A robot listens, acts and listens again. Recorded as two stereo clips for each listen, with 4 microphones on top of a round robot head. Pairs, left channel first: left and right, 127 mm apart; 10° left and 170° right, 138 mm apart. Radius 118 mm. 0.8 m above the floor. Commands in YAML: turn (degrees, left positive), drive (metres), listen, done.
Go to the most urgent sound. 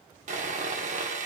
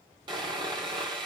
listen: true
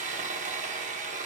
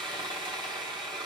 listen: true
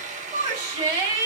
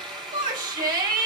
turn: -155
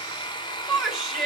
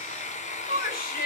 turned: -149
drive: 1.0
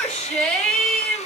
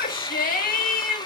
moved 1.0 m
drive: 1.0
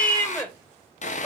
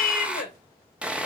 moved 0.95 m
turn: 10
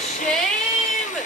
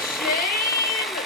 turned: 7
drive: 1.0
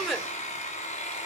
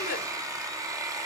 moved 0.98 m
drive: 1.0
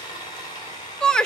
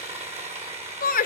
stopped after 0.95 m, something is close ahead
done: "Arrived at the shout, straight ahead."